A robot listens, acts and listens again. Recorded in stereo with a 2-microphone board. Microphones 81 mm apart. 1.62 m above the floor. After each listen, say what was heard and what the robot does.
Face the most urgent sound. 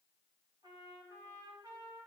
Keep listening.
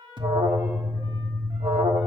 Turn 90° right.
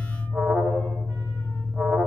Found it: an alarm, straight ahead, 1 to 2 m away.